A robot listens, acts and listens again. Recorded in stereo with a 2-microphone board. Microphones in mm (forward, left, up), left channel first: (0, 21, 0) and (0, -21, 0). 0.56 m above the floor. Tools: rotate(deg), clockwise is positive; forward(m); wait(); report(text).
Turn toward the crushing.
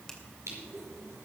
rotate(90)
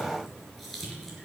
report("Found it: crushing, straight ahead, over 4 m away.")